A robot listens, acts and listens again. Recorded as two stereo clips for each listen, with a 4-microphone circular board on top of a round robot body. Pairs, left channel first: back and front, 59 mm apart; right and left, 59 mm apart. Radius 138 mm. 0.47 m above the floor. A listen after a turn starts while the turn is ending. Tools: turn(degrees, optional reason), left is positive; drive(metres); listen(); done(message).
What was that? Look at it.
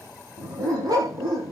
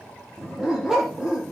done("Found it: a dog barking, straight ahead.")